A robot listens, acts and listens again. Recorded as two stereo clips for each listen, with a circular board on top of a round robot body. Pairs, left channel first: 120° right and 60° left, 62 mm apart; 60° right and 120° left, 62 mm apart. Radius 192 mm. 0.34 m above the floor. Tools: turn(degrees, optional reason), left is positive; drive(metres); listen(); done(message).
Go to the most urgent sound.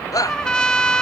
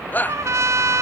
turn(degrees=-115, reason="The shout: 115° right.")
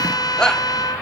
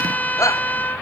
turn(degrees=-45, reason="The shout is now 45° right.")
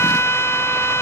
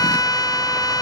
listen()
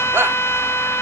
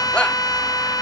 turn(degrees=10, reason="The shout is now 10° left.")
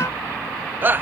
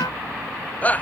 drive(metres=1.0)
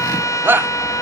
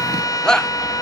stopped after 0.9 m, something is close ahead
turn(degrees=15, reason="The shout is now 15° left.")
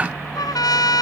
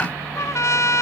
listen()
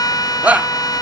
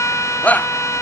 done("Arrived at the shout, straight ahead.")